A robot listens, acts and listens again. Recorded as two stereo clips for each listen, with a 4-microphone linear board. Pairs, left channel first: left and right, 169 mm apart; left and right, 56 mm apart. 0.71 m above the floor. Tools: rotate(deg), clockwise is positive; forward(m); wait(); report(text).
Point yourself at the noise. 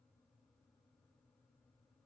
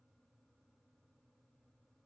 wait()
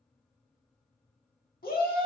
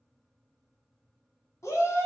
rotate(-60)
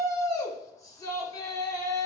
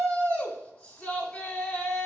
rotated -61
rotate(-20)
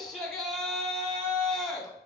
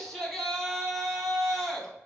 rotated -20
report("Found it: a shout, straight ahead, 1 to 2 m away.")